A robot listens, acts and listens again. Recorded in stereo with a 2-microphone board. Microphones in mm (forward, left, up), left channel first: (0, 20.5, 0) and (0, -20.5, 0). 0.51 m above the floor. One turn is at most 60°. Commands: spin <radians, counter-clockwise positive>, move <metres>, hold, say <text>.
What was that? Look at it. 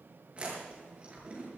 spin -0.52
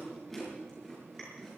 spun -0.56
say Found it: chewing, straight ahead.